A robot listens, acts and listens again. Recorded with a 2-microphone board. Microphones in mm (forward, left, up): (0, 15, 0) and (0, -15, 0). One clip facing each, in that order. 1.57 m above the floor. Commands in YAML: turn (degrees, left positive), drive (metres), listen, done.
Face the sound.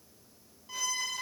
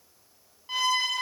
turn: -45
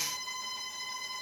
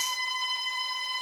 turn: -80
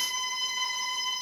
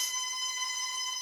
turn: 20
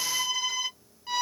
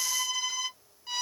turn: 10
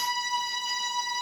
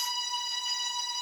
done: "Found it: a violin, straight ahead, under 1 m away."